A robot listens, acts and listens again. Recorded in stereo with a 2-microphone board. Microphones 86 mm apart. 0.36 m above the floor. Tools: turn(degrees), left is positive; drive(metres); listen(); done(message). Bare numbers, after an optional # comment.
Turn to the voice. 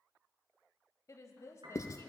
# The woman speaking: about 40° left or 140° left.
turn(40)
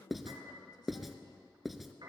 # So it is at 90° left.
turn(90)
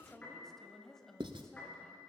done("Facing the woman speaking, 1 to 2 m away.")